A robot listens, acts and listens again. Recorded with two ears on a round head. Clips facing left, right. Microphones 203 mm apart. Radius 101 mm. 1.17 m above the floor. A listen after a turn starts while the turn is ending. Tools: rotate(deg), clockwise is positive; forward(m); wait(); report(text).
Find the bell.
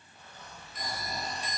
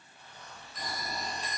rotate(-30)
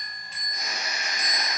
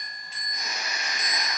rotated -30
rotate(-130)
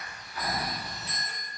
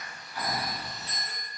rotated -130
rotate(-35)
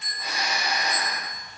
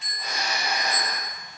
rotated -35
rotate(10)
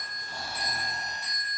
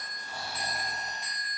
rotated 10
report("Found it: a bell, straight ahead.")